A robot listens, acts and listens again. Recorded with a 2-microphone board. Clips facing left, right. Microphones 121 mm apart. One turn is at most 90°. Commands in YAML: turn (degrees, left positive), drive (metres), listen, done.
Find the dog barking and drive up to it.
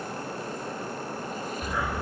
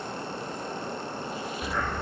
turn: 30
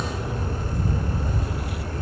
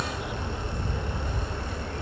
turn: 90
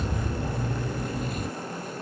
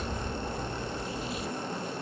turn: 85
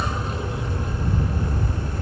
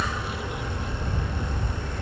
turn: 30
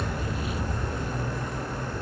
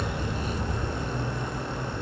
drive: 1.0
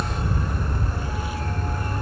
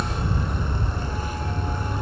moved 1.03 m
drive: 1.0
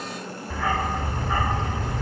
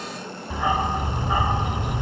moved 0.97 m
turn: -20
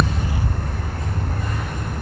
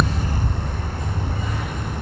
drive: 1.0
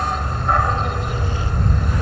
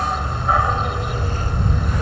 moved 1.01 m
drive: 1.0
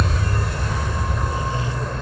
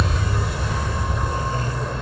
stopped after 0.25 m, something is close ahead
done: "Arrived at the dog barking, straight ahead."